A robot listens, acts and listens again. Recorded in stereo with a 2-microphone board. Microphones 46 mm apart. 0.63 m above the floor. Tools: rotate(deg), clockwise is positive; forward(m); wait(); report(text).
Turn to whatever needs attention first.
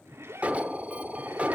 rotate(30)
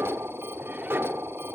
rotate(120)
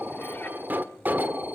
rotate(40)
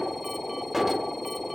report("Found it: an alarm, straight ahead, 1 to 2 m away.")